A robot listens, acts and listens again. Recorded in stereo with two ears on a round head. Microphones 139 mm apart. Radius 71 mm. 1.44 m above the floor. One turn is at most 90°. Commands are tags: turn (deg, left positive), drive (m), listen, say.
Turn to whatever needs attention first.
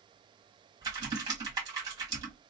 <listen/>
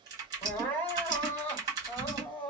<turn deg="30"/>
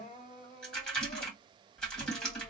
<turn deg="90"/>
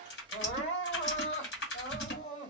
<turn deg="45"/>
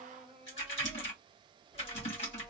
<say>Facing the crying, 2 to 4 m away.</say>